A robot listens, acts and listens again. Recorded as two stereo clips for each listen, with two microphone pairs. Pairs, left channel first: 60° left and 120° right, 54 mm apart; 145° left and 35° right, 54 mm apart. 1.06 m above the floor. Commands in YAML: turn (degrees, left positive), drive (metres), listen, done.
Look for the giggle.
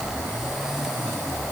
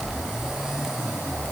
listen: true
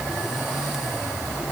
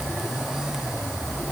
listen: true
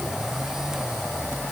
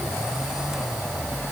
done: "I can't make out a giggle to turn to."